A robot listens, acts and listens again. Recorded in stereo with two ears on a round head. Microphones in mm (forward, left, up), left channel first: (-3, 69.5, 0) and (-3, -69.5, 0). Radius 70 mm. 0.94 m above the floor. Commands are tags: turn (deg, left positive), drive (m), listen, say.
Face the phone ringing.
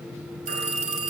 <turn deg="-50"/>
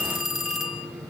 <say>Found it: a phone ringing, straight ahead.</say>